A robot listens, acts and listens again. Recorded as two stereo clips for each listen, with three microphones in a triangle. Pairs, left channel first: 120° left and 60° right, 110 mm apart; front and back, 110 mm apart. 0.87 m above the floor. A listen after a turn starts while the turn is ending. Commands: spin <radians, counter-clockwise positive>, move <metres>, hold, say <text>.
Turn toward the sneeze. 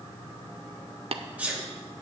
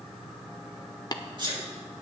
spin -2.36
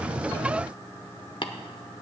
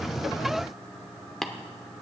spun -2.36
say I heard a sneeze from this way, but can't make it out now.